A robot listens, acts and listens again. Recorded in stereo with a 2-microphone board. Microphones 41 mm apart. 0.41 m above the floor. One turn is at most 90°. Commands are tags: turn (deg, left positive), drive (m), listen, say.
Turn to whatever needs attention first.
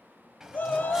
<turn deg="40"/>
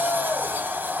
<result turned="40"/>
<turn deg="90"/>
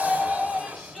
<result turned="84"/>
<say>Found it: a shout, straight ahead.</say>